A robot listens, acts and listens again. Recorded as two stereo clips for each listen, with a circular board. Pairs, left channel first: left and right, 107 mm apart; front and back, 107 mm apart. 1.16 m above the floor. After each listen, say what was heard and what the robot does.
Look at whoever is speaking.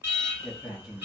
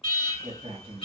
The man speaking: 175° right. Turn 175° right.
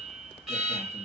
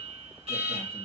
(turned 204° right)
Nothing new. It was at 30° left. Turn 30° left.
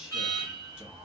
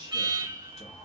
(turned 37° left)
The man speaking is now 10° right. Turn 10° right.
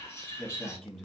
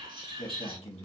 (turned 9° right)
Facing the man speaking.